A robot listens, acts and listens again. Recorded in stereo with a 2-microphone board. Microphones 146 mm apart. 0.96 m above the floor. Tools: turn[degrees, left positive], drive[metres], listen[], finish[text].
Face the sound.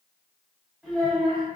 Action: turn[30]
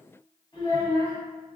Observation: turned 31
Thought: So it is at 150° left.
Action: turn[150]
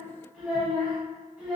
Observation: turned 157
Action: finish[Found it: a child speaking, straight ahead.]